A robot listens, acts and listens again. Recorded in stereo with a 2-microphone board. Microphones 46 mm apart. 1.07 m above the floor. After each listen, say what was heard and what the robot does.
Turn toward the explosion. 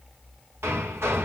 Keep listening.
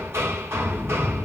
The explosion: about 45° left or 135° left. Turn 45° left.
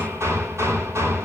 Keep listening.
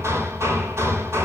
I heard an explosion, but can't make it out now. It was about straight ahead or 90° left.